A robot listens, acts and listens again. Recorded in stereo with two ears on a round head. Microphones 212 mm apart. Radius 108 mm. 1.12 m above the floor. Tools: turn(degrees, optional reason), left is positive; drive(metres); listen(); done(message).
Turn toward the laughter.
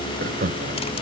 turn(degrees=-40, reason="The laughter: about 40° right or 140° right.")
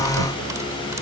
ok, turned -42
listen()
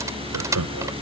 turn(degrees=-100, reason="So it is at 100° right.")
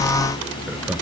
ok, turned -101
listen()
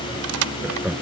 done("Facing the laughter.")